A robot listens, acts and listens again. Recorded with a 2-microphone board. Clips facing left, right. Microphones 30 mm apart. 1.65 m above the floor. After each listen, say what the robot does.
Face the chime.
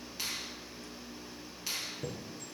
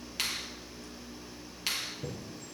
Turn 65° left.
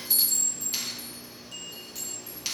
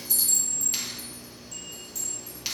Turn 40° left.
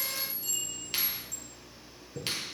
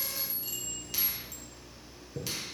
Turn 15° right.
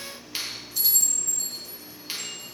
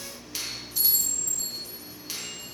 Facing the chime, over 4 m away.